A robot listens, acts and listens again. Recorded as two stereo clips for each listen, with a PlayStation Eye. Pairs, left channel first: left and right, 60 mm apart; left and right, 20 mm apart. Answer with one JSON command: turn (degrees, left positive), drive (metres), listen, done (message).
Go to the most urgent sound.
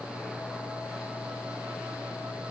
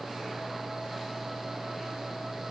{"listen": true}
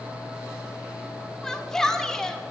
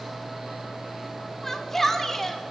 {"turn": 30}
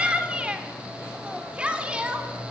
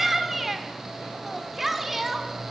{"turn": -20}
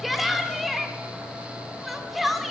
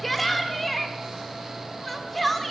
{"drive": 1.0}
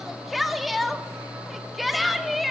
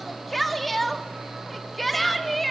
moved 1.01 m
{"drive": 1.0}
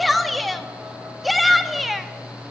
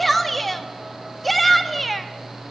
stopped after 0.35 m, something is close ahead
{"done": "I am next to the shout."}